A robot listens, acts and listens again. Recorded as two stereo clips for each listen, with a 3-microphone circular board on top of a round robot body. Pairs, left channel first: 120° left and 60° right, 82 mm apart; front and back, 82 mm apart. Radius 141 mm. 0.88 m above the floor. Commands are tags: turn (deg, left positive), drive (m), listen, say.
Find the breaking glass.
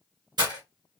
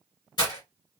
<turn deg="-30"/>
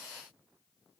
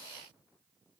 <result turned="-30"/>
<say>Facing where the breaking glass came from. I can't hear it now.</say>